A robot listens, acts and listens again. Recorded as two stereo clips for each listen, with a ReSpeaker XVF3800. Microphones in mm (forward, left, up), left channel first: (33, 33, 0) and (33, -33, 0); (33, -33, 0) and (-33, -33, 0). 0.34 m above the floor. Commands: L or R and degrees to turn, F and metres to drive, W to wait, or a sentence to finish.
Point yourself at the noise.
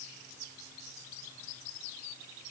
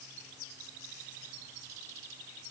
W
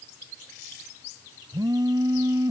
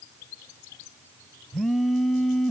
R90
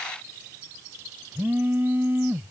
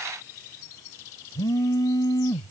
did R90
R30
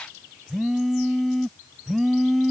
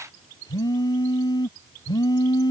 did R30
Found it: a phone buzzing, straight ahead.